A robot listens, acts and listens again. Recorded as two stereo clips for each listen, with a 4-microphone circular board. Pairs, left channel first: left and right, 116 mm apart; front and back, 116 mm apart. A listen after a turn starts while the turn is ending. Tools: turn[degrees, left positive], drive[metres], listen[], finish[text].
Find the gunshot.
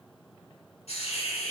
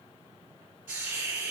Action: listen[]
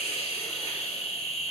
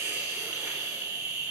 Action: listen[]
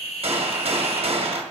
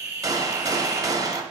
Thought: The gunshot: 120° right.
Action: turn[-120]
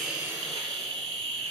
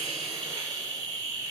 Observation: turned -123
Action: finish[I heard a gunshot from this way, but can't make it out now.]